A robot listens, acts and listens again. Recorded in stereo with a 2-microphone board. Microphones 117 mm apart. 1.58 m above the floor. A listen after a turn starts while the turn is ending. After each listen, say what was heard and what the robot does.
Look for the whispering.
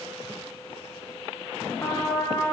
Keep listening.
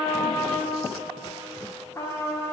Keep listening.
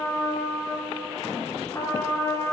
I can't make out whispering, only a trumpet.